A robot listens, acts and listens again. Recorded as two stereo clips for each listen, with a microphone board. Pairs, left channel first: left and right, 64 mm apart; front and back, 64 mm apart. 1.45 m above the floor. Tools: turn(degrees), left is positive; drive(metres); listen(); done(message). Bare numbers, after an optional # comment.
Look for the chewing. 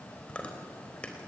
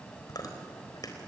# The chewing: 20° left.
turn(20)
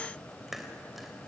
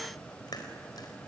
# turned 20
done("Facing the chewing.")